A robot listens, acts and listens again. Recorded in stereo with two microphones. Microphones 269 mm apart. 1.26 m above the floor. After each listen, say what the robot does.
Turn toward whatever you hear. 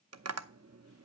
Turn 70° right.
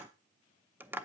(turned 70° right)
Facing the tapping, under 1 m away.